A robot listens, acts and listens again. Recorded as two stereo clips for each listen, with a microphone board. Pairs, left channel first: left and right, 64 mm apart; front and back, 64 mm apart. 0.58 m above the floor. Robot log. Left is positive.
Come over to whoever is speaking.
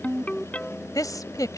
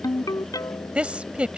note: The woman speaking: 110° left.
cmd yaw +110
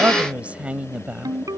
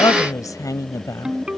note: The woman speaking is now 20° right.
cmd yaw -20
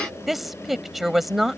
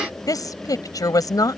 cmd fwd 1.0
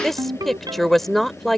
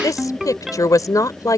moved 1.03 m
cmd fwd 1.0
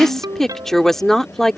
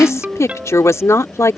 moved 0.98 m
note: The woman speaking is now 10° left.
cmd yaw +10
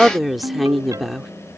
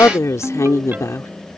cmd fwd 1.0
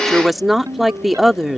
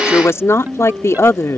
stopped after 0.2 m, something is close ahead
end: I am next to the woman speaking.